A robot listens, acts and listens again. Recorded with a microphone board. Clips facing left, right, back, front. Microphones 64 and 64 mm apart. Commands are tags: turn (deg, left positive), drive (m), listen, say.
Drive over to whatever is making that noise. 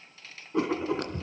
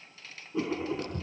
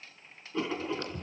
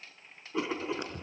<turn deg="70"/>
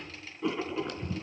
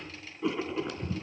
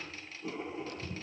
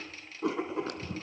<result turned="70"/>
<drive m="1.0"/>
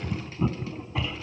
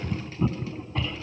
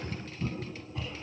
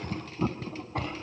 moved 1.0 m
<drive m="1.0"/>
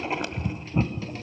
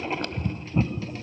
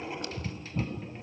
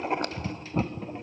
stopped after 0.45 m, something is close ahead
<turn deg="10"/>
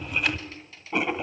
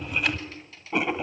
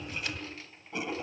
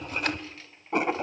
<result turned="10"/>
<say>I am next to the writing.</say>